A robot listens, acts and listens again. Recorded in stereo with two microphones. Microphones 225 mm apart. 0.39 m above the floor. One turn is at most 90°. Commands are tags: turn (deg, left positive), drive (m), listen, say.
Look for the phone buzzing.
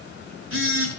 <turn deg="-60"/>
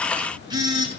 <turn deg="-20"/>
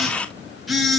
<say>Found it: a phone buzzing, straight ahead.</say>